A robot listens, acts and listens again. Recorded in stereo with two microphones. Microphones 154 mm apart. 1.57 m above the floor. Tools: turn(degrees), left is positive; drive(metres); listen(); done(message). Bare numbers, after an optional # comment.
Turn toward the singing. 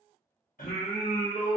# The singing: about 65° left or 115° left.
turn(65)
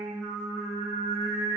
done("Facing the singing, under 1 m away.")